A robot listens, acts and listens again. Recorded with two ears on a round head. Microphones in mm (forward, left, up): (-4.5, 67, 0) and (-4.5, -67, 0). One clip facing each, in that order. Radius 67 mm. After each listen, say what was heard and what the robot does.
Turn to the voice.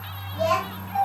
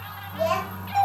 Turn 30° left.
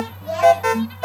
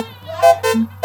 Keep listening.
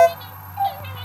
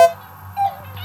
Keep listening.
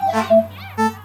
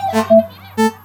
I heard a child speaking, but can't make it out now. It was about 30° right or 150° left.